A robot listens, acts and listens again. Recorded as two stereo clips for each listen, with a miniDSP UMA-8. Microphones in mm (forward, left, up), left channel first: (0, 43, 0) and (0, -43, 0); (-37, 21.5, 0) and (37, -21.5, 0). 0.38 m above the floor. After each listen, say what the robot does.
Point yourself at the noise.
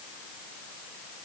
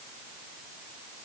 Keep listening.
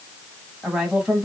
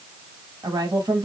Turn 10° right.
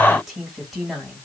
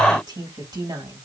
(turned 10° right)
Facing the woman speaking.